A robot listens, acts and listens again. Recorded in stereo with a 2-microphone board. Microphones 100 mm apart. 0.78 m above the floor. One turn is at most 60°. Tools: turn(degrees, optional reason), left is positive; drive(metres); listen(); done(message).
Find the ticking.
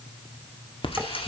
turn(degrees=60, reason="The ticking: about 65° left or 115° left.")
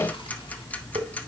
turn(degrees=15, reason="So it is at 15° left.")
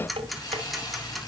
done("Found it: ticking, straight ahead.")